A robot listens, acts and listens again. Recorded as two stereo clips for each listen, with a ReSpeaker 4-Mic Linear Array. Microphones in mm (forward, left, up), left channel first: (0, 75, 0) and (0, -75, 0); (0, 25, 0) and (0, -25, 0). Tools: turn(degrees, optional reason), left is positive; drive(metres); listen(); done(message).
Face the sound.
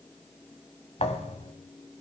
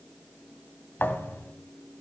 turn(degrees=45, reason="The thud: about 45° left or 135° left.")
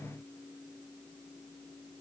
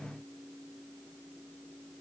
listen()
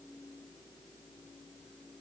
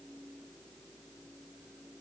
done("I heard a thud, but can't make it out now. It was about straight ahead or 90° left.")